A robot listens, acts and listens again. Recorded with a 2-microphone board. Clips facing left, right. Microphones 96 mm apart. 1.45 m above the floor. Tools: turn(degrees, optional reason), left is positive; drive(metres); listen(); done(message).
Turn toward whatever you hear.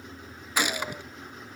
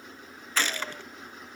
turn(degrees=30)
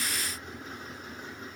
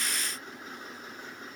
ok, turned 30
listen()
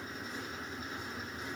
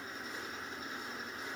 done("I heard a gunshot, but can't make it out now. It was about 15° right or 135° left.")